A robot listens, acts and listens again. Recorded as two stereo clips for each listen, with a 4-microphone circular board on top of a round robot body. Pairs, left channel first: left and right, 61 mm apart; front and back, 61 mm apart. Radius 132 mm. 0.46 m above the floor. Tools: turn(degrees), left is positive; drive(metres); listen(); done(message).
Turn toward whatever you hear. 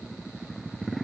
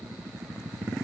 listen()
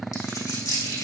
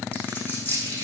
turn(degrees=65)
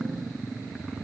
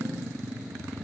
done("I heard a dropped coin from this way, but can't make it out now.")